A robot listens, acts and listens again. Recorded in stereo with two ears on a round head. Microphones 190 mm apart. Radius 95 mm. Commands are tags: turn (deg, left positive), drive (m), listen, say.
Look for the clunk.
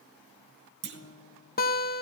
<turn deg="-55"/>
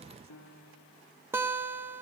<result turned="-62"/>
<listen/>
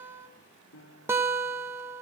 <say>I heard a clunk, but can't make it out now. It was about 5° left or 60° right.</say>